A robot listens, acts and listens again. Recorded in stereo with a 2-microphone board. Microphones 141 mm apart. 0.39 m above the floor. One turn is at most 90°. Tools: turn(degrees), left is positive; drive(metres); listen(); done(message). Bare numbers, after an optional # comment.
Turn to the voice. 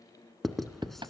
listen()
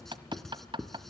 listen()
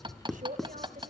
# The man speaking: about 60° right or 120° right.
turn(-60)
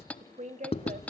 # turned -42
# So it is at 65° right.
turn(-65)
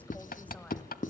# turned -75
# Nothing new. It was at 10° left.
turn(10)
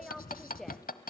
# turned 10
done("Found it: a man speaking, straight ahead.")